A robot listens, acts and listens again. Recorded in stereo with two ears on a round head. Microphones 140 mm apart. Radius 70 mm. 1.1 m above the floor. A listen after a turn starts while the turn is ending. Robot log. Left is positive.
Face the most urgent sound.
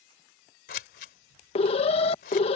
note: The alarm: about 40° left or 140° left.
cmd yaw +40
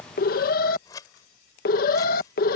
note: So it is at 95° left.
cmd yaw +95
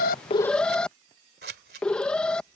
end: Found it: an alarm, straight ahead.